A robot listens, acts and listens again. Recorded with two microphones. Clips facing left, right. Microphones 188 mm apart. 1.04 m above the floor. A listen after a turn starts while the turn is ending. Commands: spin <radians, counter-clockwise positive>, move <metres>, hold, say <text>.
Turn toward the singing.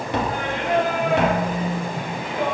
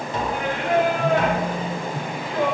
spin 0.35
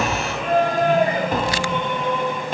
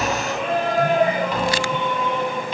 spin 2.09
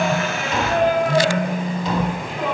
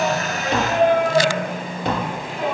say Facing the singing, over 4 m away.